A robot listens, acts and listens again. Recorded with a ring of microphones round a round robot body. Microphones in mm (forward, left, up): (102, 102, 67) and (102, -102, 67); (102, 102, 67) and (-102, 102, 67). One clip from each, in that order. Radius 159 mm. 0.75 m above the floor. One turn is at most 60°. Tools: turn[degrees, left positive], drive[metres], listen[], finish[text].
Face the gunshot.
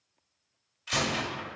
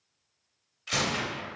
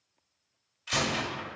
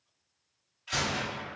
Action: finish[Found it: a gunshot, straight ahead, 1 to 2 m away.]